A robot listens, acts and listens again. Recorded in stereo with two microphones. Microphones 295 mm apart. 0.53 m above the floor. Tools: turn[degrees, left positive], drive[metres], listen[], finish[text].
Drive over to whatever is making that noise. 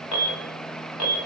Action: turn[90]
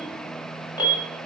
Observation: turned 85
Thought: So it is at 15° left.
Action: turn[15]
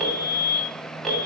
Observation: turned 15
Action: drive[1.0]
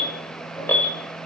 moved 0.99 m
Action: drive[1.0]
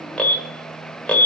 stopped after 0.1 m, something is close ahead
Action: finish[I am next to the alarm.]